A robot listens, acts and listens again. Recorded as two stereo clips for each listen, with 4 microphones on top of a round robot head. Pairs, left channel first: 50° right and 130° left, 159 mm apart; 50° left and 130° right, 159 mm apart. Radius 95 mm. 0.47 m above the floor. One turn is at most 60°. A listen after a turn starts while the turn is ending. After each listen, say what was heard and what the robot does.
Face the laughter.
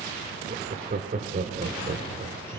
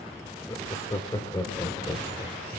The laughter: 115° left. Turn 60° left.
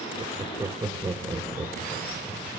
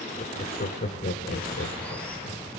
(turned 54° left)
The laughter is now 60° left. Turn 60° left.
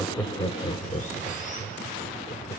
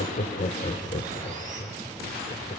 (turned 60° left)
Found it: laughter, straight ahead, 1 to 2 m away.